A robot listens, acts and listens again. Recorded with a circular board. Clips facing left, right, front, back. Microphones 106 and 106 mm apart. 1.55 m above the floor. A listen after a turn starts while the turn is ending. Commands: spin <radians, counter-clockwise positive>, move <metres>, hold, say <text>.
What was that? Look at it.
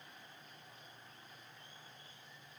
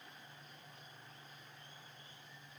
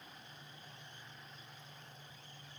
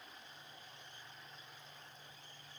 hold
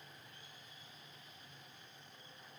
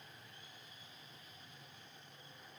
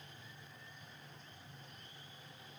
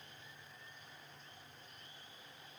hold
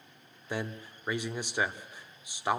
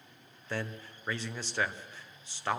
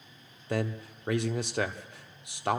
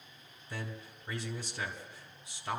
spin 0.26
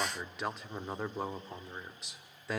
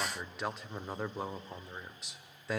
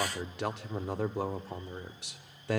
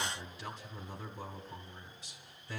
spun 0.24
say Facing the man speaking, 1 to 2 m away.